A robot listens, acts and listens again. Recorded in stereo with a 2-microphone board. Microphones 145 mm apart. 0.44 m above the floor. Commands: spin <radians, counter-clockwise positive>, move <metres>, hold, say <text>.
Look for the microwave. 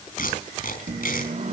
spin -0.96
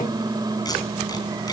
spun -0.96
spin -0.61
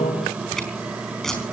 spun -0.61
spin -0.17
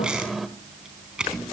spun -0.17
say Found it: a microwave, straight ahead, 1 to 2 m away.